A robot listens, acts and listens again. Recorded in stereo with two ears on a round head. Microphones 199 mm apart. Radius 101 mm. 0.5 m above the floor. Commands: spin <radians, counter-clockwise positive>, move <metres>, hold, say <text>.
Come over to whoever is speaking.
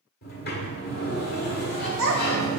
spin -1.22
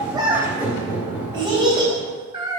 spin -0.35
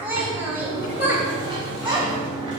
spin -0.17
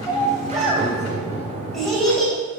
move 1.0
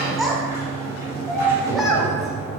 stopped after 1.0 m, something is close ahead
say Arrived at the child speaking, straight ahead.